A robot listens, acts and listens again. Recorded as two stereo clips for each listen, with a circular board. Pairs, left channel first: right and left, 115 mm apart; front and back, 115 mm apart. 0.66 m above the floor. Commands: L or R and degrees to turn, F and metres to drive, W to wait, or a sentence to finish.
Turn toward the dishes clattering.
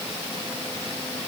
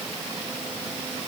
W
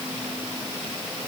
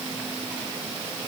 W
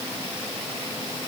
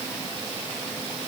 I can't make out dishes clattering.